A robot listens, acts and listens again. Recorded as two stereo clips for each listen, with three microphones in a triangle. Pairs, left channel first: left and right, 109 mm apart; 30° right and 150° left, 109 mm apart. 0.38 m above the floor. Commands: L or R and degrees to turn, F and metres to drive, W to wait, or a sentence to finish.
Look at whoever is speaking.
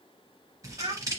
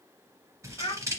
R65
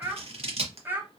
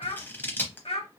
R20
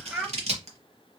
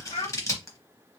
R10
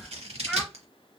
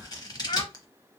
Found it: a child speaking, straight ahead.